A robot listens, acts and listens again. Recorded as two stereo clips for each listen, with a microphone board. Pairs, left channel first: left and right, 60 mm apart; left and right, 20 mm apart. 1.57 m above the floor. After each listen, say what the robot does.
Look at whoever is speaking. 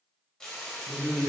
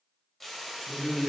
Turn 55° left.
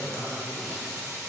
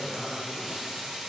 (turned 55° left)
Turn 55° left.
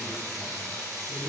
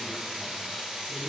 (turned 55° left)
Found it: a man speaking, straight ahead.